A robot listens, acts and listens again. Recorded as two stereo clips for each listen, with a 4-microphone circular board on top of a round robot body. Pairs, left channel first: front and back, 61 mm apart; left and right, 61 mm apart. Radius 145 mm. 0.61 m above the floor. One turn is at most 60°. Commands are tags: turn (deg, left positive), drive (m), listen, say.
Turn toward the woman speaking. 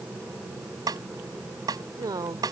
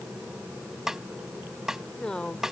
<turn deg="60"/>
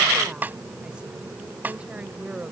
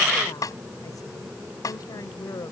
<turn deg="60"/>
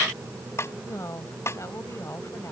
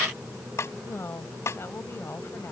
<turn deg="40"/>
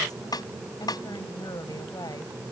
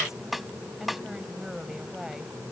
<say>Found it: a woman speaking, straight ahead.</say>